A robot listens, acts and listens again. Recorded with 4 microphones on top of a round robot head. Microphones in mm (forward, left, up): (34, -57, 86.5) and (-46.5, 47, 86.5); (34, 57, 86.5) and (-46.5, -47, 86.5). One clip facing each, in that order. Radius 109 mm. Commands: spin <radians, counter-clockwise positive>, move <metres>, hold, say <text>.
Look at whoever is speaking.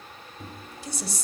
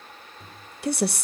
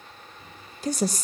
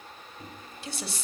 spin 1.75
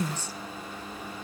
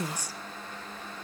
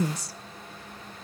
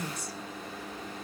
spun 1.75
spin 0.87
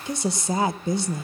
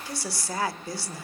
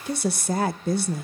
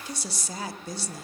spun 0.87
spin 0.26
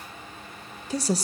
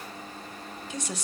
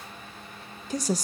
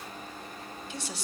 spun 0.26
say Found it: a woman speaking, straight ahead, under 1 m away.